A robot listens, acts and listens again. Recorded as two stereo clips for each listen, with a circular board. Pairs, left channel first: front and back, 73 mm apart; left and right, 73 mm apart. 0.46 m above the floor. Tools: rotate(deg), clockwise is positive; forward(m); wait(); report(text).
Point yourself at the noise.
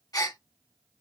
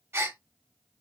rotate(35)
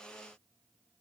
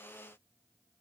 report("Facing where the gasp came from. I can't hear it now.")